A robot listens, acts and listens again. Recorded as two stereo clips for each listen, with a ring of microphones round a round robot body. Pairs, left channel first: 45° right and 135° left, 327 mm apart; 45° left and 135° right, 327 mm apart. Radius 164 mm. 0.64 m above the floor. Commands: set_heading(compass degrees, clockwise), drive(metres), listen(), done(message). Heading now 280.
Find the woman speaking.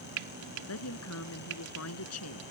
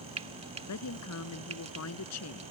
done("Found it: a woman speaking, straight ahead.")